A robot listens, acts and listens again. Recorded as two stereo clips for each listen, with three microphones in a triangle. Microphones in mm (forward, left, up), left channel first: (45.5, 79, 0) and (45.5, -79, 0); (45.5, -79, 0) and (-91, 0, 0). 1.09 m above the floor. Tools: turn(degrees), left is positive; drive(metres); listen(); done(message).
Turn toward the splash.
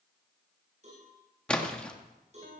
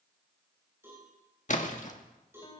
done("Facing the splash, 1 to 2 m away.")